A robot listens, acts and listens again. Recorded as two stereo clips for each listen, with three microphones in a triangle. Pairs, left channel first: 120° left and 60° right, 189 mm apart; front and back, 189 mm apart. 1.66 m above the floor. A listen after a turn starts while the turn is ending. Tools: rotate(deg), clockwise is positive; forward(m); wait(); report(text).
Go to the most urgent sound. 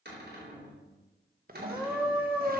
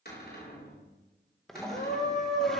rotate(-25)
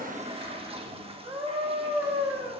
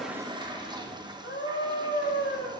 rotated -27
forward(1.0)
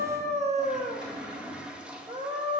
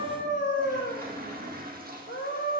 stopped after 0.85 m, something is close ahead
report("Blocked. The scream is further on, straight ahead.")